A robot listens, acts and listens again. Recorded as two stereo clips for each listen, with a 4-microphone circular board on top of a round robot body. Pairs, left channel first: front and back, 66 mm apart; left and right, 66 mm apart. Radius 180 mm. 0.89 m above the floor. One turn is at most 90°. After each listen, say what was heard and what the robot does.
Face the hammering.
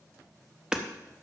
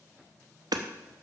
The hammering: 100° right. Turn 90° right.
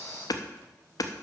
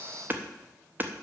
The hammering is now 30° right. Turn 30° right.
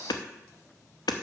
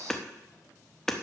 Facing the hammering, under 1 m away.